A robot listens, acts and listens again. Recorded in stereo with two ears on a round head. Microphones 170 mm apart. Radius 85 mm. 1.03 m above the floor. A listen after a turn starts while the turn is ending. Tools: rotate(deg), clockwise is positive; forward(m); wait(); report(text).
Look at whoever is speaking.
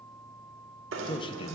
rotate(-30)
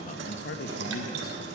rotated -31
rotate(-120)
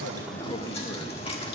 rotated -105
rotate(-15)
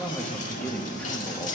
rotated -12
report("Facing the man speaking.")